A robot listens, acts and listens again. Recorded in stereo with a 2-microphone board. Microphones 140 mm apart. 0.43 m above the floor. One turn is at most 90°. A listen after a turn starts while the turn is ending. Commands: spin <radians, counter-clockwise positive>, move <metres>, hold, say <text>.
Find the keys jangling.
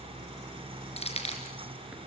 spin 0.79
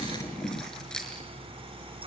say Found it: keys jangling, straight ahead.